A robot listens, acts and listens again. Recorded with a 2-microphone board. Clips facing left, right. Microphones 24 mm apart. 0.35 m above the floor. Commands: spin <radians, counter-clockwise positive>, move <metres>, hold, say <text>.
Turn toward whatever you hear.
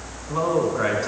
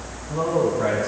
spin 0.96
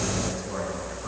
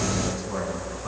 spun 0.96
say Found it: a man speaking, straight ahead.